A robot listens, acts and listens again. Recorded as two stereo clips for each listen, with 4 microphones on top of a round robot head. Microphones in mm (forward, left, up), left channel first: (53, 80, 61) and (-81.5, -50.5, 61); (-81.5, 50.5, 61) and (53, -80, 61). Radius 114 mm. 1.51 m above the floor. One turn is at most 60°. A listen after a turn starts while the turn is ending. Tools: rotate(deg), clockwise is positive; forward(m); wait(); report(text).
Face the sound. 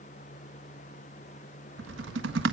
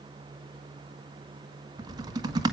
rotate(60)
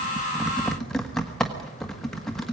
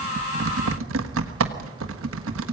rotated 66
rotate(45)
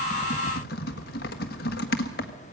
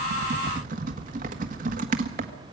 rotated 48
report("Facing the typing on a keyboard.")